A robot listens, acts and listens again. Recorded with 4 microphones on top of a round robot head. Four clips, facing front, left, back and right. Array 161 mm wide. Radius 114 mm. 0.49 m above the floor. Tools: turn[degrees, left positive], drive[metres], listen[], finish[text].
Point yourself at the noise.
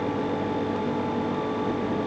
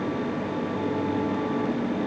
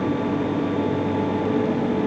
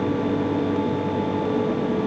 Action: listen[]
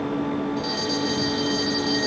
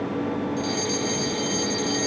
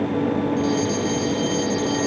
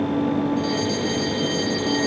Thought: The fire alarm: 45° left.
Action: turn[45]
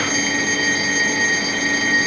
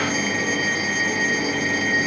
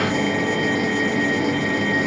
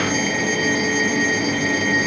Action: finish[Found it: a fire alarm, straight ahead.]